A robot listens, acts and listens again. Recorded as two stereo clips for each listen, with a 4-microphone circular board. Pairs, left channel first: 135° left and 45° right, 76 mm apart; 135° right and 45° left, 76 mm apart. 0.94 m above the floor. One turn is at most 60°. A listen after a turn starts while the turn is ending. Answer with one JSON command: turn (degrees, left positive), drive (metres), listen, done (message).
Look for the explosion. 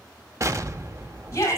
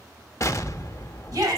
{"turn": -60}
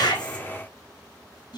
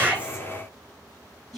{"turn": -30}
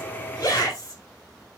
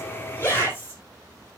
{"done": "I heard an explosion from this way, but can't make it out now."}